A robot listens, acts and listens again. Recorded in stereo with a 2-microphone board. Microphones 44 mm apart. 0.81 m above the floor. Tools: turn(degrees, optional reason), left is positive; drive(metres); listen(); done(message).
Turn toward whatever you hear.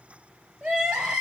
turn(degrees=-20, reason="The crying: about 20° right or 160° right.")
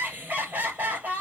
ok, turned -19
turn(degrees=-140, reason="So it is at 140° right.")
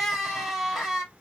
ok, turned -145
done("Facing the crying.")